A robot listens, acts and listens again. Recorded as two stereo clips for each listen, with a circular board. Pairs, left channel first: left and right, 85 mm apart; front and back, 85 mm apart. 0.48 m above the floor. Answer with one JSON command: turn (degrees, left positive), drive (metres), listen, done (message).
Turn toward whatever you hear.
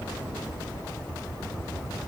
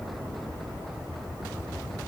{"listen": true}
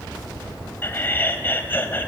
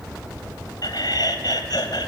{"turn": 25}
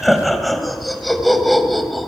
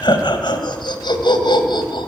{"done": "Facing the laughter."}